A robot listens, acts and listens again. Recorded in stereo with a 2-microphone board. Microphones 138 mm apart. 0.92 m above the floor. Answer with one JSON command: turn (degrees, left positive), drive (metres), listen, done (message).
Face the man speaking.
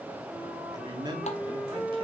{"turn": -30}
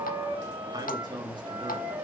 {"turn": -30}
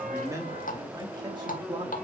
{"turn": -35}
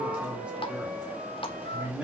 {"done": "Found it: a man speaking, straight ahead, 2 to 4 m away."}